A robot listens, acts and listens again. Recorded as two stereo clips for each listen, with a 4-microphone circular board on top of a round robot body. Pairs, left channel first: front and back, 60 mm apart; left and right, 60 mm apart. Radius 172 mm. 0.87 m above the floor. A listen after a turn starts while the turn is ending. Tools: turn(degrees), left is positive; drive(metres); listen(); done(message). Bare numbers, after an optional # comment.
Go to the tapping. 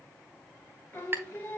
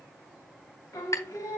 # The tapping: 125° left.
turn(125)
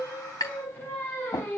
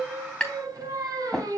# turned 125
drive(1.0)
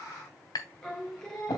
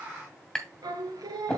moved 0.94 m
drive(1.0)
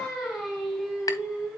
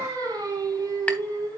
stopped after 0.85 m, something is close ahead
listen()
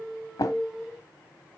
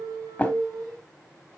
# The tapping is now 20° left.
turn(20)
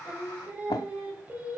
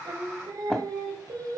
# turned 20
done("Arrived at the tapping, straight ahead.")